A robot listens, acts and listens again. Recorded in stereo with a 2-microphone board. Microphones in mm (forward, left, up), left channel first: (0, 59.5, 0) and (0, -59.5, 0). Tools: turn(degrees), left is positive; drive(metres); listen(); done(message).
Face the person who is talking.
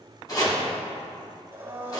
listen()
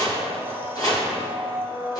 listen()
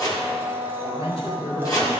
turn(degrees=55)
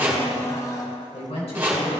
turn(degrees=70)
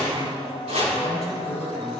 done("Facing the woman speaking.")